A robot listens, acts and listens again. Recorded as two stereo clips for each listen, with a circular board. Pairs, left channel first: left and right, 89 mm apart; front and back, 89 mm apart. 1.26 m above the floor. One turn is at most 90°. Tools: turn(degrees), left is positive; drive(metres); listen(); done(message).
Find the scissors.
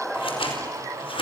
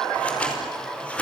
turn(degrees=75)
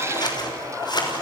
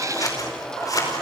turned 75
turn(degrees=50)
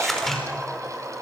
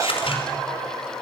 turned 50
done("Facing the scissors, over 4 m away.")